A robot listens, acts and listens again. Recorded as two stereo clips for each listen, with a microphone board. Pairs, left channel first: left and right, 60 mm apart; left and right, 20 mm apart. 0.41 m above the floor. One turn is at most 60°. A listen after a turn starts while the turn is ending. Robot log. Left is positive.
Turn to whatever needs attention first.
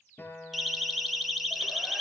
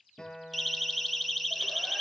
cmd yaw +30
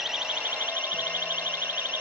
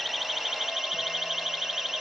note: So it is at 35° right.
cmd yaw -35
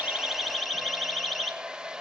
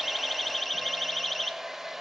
end: Found it: a siren, straight ahead, 2 to 4 m away.